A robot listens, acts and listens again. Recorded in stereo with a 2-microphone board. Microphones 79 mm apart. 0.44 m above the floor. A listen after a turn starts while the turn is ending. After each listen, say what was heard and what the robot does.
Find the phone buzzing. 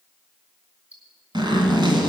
Keep listening.
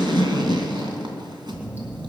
The phone buzzing: about 15° right or 165° right. Turn 15° right.
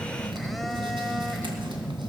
Facing the phone buzzing.